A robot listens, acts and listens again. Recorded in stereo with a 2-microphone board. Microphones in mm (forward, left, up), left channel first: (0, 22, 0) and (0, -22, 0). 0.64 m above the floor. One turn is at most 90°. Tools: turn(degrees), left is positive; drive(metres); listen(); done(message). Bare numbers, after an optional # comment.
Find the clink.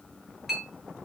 turn(-30)
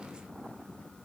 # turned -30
listen()
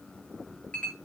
# So it is at 25° left.
turn(25)
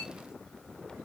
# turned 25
listen()
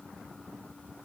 listen()
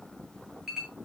# The clink is now 10° right.
turn(-10)
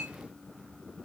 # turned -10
listen()
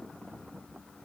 listen()
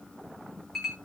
done("Found it: a clink, straight ahead, over 4 m away.")